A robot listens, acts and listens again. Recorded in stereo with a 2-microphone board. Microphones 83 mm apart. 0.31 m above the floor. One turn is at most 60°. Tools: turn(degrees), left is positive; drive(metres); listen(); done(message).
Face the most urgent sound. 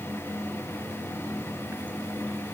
listen()
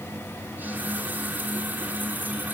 listen()
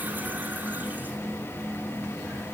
done("I can't make out anything urgent to turn to.")